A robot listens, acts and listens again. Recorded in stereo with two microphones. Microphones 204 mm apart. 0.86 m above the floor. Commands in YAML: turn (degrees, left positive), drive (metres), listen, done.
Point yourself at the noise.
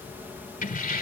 turn: 45
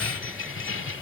turn: 75
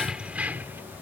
turn: -10
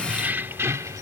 turn: -15
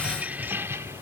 turn: -15
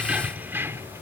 turn: -15
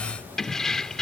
done: "Facing the keys jangling."